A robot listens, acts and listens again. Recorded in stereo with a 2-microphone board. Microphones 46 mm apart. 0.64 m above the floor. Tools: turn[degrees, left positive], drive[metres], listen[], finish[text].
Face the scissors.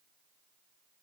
Action: listen[]
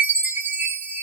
Action: listen[]
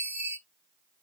Action: finish[I can't make out scissors, only a chime.]